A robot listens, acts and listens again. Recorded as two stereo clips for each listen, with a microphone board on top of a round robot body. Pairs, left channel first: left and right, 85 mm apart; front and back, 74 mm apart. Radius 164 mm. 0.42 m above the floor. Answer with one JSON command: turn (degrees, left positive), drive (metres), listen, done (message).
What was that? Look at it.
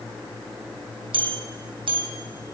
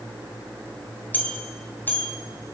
{"turn": -65}
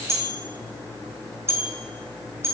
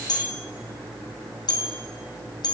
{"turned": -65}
{"turn": -30}
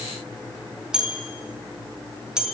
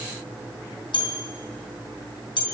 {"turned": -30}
{"done": "Facing the bell, 2 to 4 m away."}